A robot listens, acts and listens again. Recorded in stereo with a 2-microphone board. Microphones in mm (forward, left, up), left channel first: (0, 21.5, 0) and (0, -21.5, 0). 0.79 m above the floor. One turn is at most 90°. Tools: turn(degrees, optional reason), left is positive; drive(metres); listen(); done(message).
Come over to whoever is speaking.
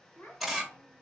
turn(degrees=65, reason="The child speaking: about 65° left or 115° left.")
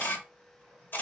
listen()
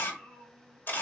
turn(degrees=50, reason="So it is at 50° left.")
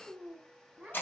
turn(degrees=-10, reason="The child speaking is now 10° right.")
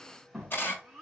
drive(metres=1.0)
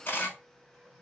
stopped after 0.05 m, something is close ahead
listen()
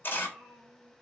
done("Something is in my way. I am facing the child speaking but have not reached it.")